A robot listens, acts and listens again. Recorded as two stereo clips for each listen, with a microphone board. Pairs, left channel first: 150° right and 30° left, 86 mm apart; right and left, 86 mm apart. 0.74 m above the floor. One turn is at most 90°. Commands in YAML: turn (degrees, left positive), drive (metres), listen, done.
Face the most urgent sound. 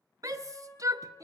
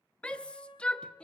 turn: -15
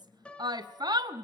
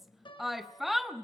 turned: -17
done: "Facing the shout."